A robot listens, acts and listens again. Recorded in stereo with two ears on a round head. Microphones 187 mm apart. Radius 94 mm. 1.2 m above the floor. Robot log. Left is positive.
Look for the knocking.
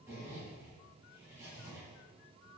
cmd idle
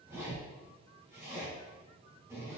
cmd idle
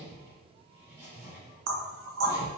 note: The knocking: about 70° right or 110° right.
cmd yaw -70
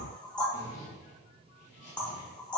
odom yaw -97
end: Found it: knocking, straight ahead.